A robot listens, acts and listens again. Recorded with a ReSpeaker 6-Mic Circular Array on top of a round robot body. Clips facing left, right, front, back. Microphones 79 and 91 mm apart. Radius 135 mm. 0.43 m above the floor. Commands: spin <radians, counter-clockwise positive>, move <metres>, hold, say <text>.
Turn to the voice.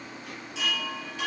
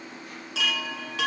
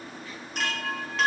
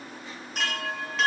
hold
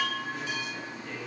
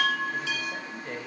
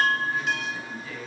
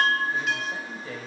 spin -2.27
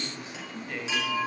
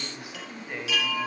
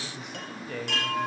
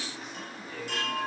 spin -0.26
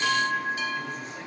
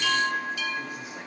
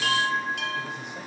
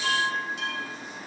hold
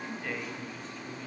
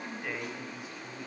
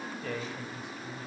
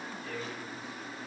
say Facing the man speaking.